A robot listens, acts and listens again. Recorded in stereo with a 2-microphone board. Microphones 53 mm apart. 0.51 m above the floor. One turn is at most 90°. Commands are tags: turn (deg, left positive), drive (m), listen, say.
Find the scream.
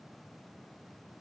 <listen/>
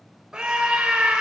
<turn deg="-15"/>
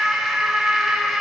<say>Found it: a scream, straight ahead, 1 to 2 m away.</say>